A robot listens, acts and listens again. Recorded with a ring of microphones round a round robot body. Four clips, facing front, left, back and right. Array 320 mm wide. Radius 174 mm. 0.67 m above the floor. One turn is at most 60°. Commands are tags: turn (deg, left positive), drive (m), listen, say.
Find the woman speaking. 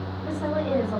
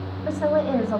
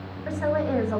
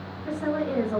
<turn deg="60"/>
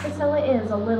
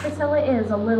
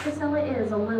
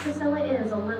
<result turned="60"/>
<turn deg="55"/>
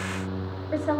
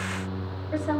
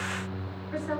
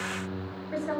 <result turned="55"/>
<turn deg="10"/>
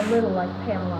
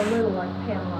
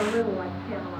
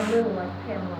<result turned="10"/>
<say>Found it: a woman speaking, straight ahead.</say>